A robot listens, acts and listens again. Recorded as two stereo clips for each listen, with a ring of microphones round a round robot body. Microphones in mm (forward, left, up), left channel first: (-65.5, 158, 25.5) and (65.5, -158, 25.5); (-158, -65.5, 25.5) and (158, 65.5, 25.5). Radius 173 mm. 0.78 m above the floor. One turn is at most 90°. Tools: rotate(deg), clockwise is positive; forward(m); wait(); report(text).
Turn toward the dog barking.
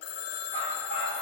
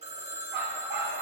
rotate(15)
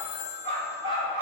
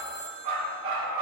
rotate(10)
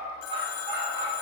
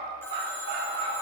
rotate(10)
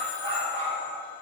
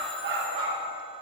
report("Facing the dog barking.")